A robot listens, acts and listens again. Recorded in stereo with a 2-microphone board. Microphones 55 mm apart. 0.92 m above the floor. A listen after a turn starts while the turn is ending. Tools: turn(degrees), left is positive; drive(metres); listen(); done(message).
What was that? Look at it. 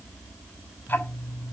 turn(degrees=35)
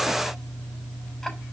done("Found it: ticking, straight ahead.")